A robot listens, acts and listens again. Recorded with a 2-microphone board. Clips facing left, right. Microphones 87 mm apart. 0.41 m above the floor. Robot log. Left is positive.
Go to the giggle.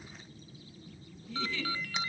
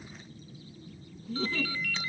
note: The giggle: about 40° right or 140° right.
cmd yaw -40
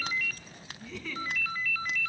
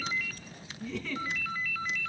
cmd fwd 1.0
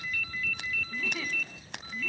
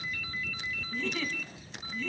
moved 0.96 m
cmd fwd 1.0
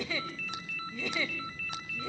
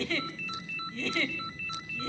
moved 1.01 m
note: The giggle is now 15° left.
cmd yaw +15
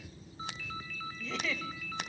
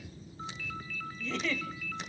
cmd fwd 1.0
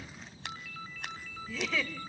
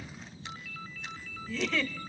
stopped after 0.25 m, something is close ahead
end: Arrived at the giggle, straight ahead.